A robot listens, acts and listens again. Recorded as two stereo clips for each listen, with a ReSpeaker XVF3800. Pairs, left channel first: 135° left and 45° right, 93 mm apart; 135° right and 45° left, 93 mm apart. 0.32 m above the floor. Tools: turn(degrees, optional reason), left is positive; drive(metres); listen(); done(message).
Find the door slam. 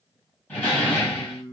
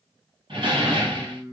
turn(degrees=65, reason="The door slam: 65° left.")
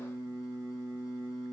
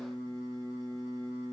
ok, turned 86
turn(degrees=-25, reason="Nothing new. It was at 25° right.")
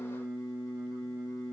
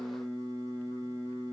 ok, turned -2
turn(degrees=-20, reason="Nothing new. It was at 20° right.")
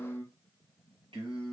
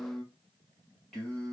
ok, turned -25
done("Facing where the door slam came from. I can't hear it now.")